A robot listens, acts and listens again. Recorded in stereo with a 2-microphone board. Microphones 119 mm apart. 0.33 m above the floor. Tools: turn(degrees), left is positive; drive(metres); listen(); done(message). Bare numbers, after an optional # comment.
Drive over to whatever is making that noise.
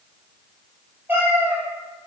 # The cat meowing: about 15° right or 165° right.
turn(-15)
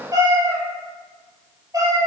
# So it is at 150° right.
turn(-150)
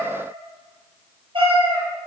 # The cat meowing is now 50° right.
turn(-50)
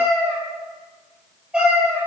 # The cat meowing is now 10° right.
turn(-10)
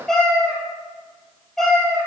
drive(1.0)
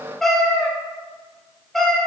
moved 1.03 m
drive(1.0)
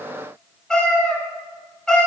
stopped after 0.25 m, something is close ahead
done("Arrived at the cat meowing, straight ahead.")